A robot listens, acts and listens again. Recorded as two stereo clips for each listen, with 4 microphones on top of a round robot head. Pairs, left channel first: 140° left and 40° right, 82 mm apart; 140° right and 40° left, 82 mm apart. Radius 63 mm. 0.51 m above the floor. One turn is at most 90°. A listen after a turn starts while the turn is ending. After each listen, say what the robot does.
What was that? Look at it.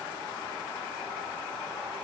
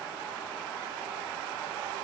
Keep listening.
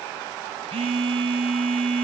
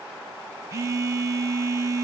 Turn 20° right.
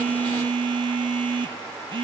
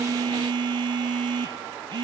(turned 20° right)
Facing the phone buzzing, 1 to 2 m away.